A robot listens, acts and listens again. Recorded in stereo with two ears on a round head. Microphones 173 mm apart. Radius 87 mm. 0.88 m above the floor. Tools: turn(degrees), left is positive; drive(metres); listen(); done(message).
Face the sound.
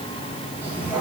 turn(degrees=-30)
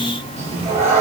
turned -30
turn(degrees=-145)
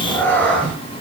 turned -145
done("Found it: a cat meowing, straight ahead.")